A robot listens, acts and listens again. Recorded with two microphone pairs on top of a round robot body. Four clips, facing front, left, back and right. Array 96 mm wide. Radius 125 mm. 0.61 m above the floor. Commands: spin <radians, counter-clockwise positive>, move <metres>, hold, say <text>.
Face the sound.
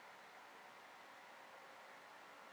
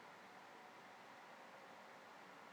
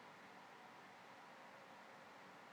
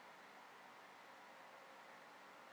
hold
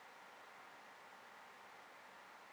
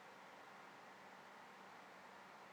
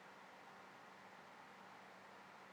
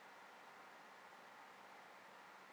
hold
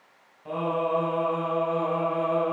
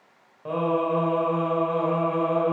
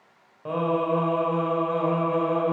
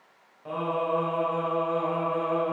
spin 2.36
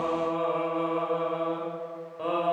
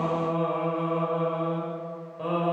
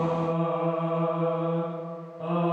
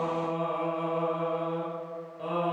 spin 0.35
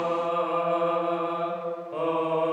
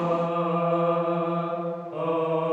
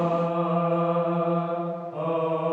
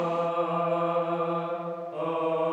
say Found it: singing, straight ahead.